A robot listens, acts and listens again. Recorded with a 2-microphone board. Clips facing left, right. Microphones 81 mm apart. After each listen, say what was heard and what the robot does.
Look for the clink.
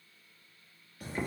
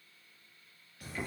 Keep listening.
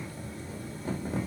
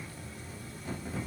Keep listening.
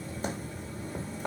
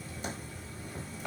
I can't make out a clink, only boiling.